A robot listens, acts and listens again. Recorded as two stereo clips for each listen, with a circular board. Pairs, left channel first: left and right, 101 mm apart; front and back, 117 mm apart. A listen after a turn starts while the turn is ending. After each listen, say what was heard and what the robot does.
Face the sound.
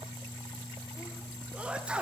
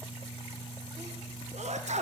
The sneeze: 170° right. Turn 170° right.
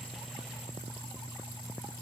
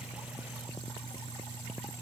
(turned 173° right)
I heard a sneeze from this way, but can't make it out now.